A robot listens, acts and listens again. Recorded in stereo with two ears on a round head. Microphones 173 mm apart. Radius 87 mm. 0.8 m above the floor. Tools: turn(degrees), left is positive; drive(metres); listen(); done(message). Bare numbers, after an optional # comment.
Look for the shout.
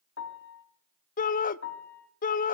# The shout: about 45° left or 135° left.
turn(45)
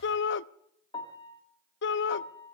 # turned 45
# So it is at 85° left.
turn(85)
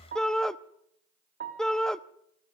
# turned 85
done("Found it: a shout, straight ahead.")